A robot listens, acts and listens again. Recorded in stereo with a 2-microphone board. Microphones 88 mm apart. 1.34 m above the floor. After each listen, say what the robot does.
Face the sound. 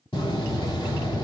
Turn 90° left.
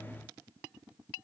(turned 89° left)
I heard a door slam from this way, but can't make it out now.